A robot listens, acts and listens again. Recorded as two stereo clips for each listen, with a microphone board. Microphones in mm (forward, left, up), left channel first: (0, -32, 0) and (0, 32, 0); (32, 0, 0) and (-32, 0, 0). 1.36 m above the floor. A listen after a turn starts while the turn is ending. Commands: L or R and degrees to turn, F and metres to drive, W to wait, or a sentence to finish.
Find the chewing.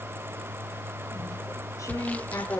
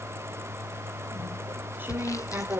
R120
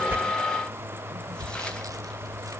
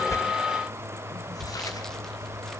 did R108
R10
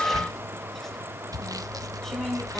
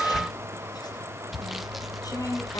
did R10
Found it: chewing, straight ahead.